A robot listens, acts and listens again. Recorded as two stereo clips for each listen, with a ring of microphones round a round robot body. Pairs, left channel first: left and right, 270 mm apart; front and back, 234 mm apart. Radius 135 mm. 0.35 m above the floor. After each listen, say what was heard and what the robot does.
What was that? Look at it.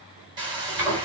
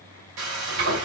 The frying: 160° right. Turn 160° right.
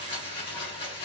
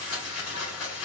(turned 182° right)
The frying is now 20° left. Turn 20° left.
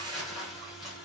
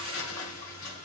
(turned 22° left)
Facing the frying, 2 to 4 m away.